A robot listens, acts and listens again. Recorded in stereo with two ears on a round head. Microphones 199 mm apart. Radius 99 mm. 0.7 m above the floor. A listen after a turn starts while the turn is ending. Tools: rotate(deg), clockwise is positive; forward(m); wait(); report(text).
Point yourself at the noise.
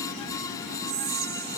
rotate(45)
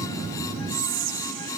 rotate(80)
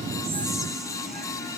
wait()
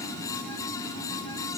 wait()
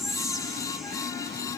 report("Facing the whispering, under 1 m away.")